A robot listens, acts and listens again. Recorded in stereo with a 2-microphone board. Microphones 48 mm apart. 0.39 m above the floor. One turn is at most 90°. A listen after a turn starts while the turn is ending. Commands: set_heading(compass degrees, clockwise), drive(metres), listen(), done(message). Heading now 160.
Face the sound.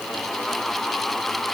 listen()
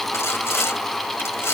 set_heading(95)
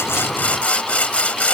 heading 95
set_heading(60)
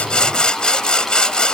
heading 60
set_heading(40)
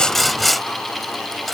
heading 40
done("Facing the sawing.")